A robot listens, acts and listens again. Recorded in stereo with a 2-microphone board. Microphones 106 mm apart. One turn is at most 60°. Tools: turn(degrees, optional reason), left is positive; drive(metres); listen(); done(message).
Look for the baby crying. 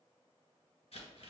listen()
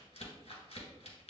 listen()
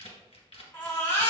turn(degrees=20, reason="The baby crying: about 20° left or 160° left.")
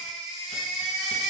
done("Facing the baby crying, 1 to 2 m away.")